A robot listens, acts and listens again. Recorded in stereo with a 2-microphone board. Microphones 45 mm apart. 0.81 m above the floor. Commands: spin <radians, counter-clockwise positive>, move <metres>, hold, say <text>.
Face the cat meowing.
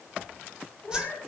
spin 0.79
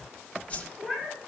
say Found it: a cat meowing, straight ahead, over 4 m away.